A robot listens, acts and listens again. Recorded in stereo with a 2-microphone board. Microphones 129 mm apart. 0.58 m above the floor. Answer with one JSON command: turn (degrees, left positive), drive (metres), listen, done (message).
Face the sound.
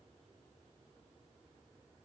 {"listen": true}
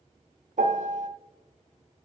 {"turn": -75}
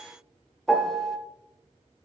{"done": "Facing the piano."}